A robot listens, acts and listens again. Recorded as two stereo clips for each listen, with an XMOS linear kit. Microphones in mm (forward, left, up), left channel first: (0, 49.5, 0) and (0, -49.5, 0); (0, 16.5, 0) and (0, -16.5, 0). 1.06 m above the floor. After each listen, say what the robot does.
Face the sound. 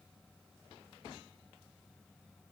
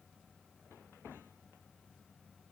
Keep listening.
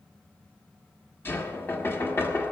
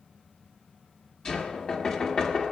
Turn 25° left.
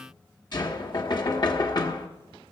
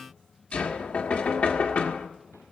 Turn 130° left.
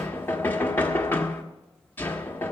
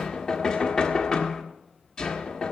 Turn 20° left.
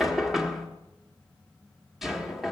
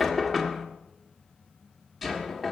Facing the knocking.